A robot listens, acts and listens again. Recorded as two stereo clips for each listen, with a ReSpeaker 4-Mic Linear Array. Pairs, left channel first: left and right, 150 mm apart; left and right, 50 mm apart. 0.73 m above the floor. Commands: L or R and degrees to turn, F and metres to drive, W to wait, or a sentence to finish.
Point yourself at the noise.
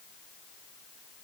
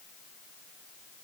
W
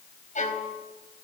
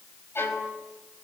L55
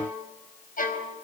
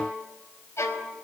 L70
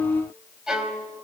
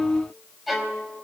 Facing the violin.